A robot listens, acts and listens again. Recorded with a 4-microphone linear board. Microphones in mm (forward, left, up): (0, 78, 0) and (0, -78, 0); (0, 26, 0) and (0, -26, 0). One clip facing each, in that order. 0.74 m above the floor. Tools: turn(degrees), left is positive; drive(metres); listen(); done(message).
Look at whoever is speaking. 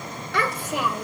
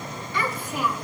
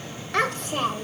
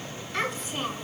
turn(degrees=90)
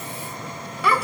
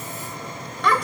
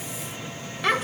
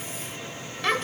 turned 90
done("Facing the child speaking, 1 to 2 m away.")